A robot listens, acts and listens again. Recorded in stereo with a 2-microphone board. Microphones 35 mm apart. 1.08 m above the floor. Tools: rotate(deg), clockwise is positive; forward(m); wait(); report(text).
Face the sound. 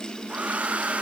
rotate(40)
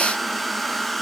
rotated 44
report("Found it: a hair dryer, straight ahead, 1 to 2 m away.")